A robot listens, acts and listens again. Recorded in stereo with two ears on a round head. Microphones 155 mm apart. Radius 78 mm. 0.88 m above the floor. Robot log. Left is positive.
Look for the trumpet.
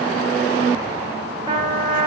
note: The trumpet: about 30° right or 150° right.
cmd yaw -30
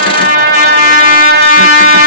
note: So it is at 120° right.
cmd yaw -120
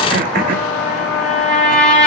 end: Found it: a trumpet, straight ahead, 2 to 4 m away.